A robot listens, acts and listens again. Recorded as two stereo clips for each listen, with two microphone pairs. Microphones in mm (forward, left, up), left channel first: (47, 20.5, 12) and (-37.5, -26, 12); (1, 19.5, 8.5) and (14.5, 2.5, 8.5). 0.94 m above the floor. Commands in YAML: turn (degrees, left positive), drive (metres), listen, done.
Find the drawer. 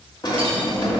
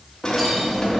turn: 70
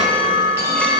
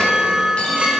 listen: true
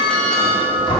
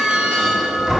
done: "Facing the drawer, 1 to 2 m away."